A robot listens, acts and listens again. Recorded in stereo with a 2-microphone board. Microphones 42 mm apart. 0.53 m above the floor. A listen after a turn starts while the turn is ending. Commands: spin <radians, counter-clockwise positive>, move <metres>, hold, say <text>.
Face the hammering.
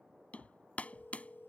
spin 0.61
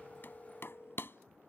spin 1.92
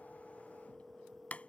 spin 0.61
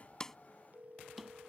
say Facing the hammering.